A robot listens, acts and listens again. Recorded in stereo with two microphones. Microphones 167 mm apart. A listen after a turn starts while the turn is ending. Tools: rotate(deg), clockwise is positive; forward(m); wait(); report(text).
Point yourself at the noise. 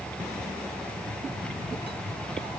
wait()
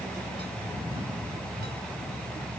wait()
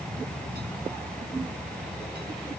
report("I can't make out anything to turn to.")